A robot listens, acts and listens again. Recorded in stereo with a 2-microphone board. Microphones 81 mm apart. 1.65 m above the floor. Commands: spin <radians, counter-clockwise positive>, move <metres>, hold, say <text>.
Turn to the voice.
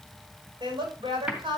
spin -1.57
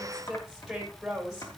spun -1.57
say Facing the woman speaking, over 4 m away.